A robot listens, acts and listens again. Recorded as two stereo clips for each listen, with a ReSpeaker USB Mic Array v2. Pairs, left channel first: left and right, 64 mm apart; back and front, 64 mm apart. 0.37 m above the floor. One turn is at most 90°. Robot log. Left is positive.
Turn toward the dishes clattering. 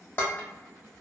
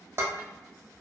note: The dishes clattering: 40° left.
cmd yaw +40
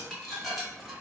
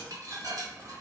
end: Facing the dishes clattering, under 1 m away.